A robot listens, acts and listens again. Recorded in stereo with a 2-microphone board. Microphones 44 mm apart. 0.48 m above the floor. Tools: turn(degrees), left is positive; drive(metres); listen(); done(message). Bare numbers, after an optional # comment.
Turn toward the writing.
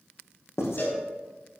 turn(90)
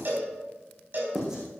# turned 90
# So it is at 15° right.
turn(-15)
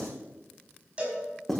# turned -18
done("Facing the writing, over 4 m away.")